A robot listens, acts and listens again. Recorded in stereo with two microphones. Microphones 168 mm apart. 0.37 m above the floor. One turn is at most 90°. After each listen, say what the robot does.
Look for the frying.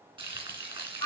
Turn 30° right.
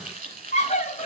Turn 90° right.
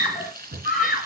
Turn 65° right.
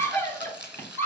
Turn 10° right.
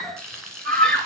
Facing the frying, 2 to 4 m away.